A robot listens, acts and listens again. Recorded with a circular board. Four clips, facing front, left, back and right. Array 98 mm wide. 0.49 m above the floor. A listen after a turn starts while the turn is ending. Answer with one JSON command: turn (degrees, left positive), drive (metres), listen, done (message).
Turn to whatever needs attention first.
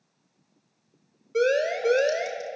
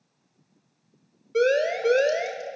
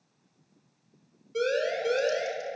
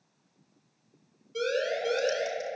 {"turn": 55}
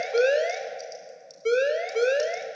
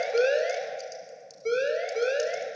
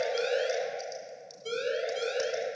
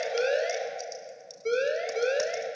{"done": "Facing the siren, 2 to 4 m away."}